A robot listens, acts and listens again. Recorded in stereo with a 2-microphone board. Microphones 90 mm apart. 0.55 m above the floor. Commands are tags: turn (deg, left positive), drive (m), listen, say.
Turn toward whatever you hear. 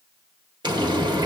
<turn deg="-50"/>
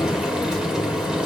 <turn deg="-10"/>
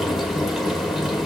<say>Found it: frying, straight ahead.</say>